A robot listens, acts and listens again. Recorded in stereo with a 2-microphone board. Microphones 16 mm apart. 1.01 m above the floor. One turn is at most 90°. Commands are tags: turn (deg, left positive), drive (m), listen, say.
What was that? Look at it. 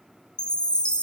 <turn deg="75"/>
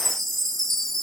<turn deg="15"/>
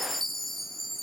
<say>Facing the chime.</say>